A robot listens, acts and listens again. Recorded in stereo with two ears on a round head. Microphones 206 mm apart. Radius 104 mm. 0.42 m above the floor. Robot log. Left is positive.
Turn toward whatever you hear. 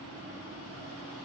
cmd idle
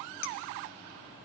cmd yaw +90
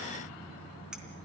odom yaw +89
cmd idle
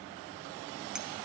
cmd idle
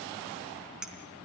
end: Facing the clink.